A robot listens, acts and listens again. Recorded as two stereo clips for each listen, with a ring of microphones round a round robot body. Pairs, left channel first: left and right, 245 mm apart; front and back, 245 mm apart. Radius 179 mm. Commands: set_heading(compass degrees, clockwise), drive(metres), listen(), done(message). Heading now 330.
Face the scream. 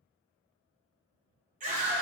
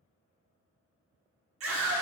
set_heading(120)
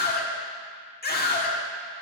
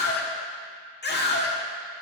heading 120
set_heading(75)
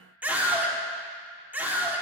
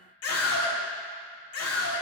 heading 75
done("Found it: a scream, straight ahead.")